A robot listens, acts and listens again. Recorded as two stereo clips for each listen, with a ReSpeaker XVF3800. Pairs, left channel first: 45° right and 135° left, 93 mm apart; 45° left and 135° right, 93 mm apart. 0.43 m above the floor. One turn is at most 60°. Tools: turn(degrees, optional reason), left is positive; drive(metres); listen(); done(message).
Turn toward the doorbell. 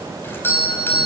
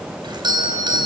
turn(degrees=-60, reason="The doorbell: 110° right.")
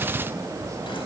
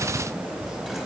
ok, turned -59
turn(degrees=-50, reason="Nothing new. It was at 50° right.")
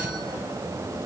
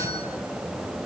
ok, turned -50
listen()
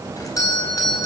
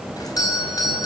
done("Found it: a doorbell, straight ahead, over 4 m away.")